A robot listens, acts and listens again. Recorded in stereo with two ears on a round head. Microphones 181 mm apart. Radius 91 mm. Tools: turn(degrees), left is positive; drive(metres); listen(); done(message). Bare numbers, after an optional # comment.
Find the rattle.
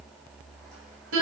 listen()
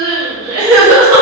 listen()
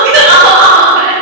done("I can't make out a rattle to turn to.")